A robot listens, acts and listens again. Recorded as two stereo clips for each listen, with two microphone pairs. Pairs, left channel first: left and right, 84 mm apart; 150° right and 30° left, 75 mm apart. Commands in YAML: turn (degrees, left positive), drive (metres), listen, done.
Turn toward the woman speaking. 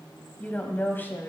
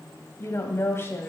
turn: 150
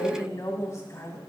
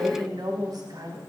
turn: 40
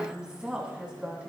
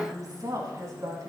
turn: -10
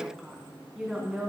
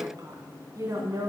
done: "Found it: a woman speaking, straight ahead."